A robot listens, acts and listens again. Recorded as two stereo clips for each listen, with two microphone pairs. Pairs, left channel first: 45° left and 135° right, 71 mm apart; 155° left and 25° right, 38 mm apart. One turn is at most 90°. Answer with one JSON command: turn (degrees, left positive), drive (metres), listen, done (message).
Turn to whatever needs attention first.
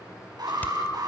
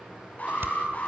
{"turn": -90}
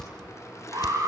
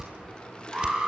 {"turn": -90}
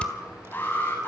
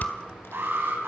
{"turn": -20}
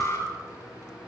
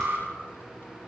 {"turn": -10}
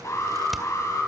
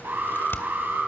{"done": "Found it: an alarm, straight ahead, over 4 m away."}